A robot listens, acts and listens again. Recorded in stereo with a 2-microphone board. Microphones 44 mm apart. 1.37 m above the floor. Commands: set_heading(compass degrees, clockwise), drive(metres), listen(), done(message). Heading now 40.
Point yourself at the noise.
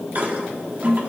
set_heading(80)
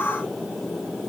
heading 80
listen()
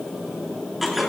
done("Facing the toilet flushing, 1 to 2 m away.")